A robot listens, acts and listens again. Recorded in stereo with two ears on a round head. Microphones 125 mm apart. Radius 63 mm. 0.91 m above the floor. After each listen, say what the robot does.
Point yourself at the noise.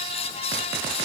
Keep listening.
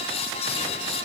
Keep listening.
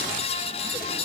I can't make out anything to turn to.